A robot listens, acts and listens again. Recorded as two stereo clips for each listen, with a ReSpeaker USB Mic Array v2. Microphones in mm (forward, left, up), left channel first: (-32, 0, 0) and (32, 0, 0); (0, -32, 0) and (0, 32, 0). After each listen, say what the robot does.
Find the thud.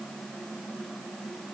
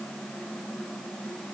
Keep listening.
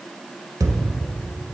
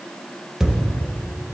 Facing the thud.